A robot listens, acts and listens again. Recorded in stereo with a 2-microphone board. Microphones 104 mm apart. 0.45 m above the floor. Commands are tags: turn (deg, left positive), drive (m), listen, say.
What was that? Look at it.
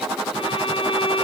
<turn deg="60"/>
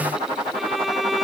<say>Facing the violin.</say>